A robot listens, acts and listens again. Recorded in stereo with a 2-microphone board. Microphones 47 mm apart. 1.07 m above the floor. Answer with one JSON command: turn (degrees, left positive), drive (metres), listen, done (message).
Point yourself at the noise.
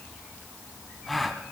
{"turn": 30}
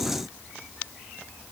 {"listen": true}
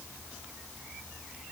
{"done": "I heard a gasp, but can't make it out now. It was about 30° right or 150° left."}